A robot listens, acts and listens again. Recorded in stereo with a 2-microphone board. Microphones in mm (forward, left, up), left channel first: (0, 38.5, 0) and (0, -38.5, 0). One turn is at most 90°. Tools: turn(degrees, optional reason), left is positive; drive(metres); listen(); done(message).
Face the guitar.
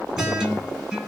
turn(degrees=-30)
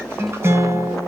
turn(degrees=-90, reason="So it is at 140° right.")
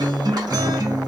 turn(degrees=-90, reason="The guitar is now 95° right.")
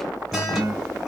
done("Found it: a guitar, straight ahead.")